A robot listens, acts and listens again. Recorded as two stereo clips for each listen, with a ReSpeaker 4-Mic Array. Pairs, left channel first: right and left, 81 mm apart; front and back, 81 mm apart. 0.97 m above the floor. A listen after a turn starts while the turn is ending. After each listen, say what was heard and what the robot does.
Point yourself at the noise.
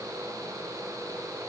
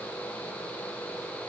Keep listening.
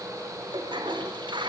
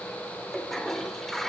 The toilet flushing: 85° left. Turn 85° left.
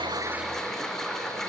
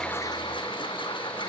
Facing the toilet flushing.